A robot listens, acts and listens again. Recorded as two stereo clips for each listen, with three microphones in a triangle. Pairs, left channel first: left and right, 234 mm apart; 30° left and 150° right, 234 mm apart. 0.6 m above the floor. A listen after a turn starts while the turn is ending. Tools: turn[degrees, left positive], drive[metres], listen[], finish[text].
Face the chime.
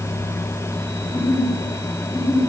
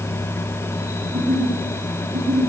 Action: listen[]
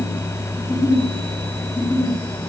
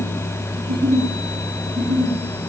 Action: listen[]
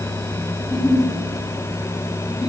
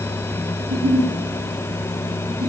Action: finish[I can't make out a chime, only a giggle.]